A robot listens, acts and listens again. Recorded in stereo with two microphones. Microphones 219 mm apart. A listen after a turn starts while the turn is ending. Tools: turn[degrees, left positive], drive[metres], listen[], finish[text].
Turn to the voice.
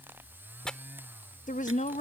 Thought: The woman speaking: about 35° left or 145° left.
Action: turn[35]
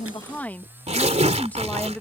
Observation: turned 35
Thought: So it is at 10° left.
Action: turn[10]
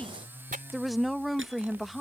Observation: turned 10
Action: finish[Facing the woman speaking.]